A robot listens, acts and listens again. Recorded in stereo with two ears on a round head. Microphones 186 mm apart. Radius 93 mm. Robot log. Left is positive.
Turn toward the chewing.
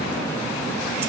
cmd idle
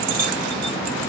cmd idle
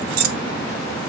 end: I can't make out chewing to turn to.